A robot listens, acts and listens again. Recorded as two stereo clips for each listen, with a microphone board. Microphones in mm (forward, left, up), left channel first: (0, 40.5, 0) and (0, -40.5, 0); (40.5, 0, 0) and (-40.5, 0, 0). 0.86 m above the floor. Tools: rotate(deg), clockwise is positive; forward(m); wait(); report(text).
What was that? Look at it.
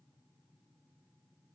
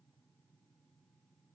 wait()
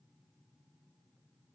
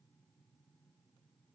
wait()
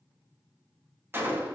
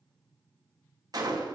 rotate(150)
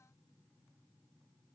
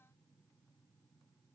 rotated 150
report("Facing where the gunshot came from. I can't hear it now.")